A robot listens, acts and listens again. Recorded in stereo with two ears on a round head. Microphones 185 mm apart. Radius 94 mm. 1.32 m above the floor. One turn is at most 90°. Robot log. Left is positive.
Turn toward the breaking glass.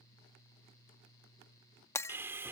cmd yaw +30
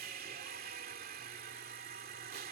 cmd idle
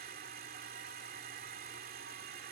end: I heard breaking glass, but can't make it out now. It was about 15° right or 135° left.